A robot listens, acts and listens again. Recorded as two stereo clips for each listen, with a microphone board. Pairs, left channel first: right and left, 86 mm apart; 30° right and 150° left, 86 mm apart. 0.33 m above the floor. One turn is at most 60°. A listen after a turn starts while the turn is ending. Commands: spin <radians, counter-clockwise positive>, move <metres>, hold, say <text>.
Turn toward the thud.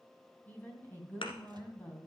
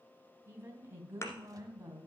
spin -1.05
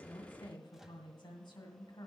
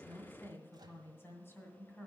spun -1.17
spin -0.35
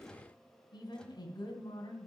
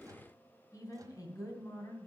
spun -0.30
say Facing where the thud came from. I can't hear it now.